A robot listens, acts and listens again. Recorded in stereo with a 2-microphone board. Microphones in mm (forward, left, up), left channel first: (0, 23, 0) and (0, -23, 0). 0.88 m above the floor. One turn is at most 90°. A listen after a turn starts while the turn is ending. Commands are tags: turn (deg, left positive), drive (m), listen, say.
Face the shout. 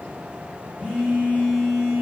<listen/>
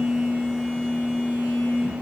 <listen/>
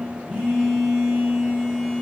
<say>I can't make out a shout, only a phone buzzing.</say>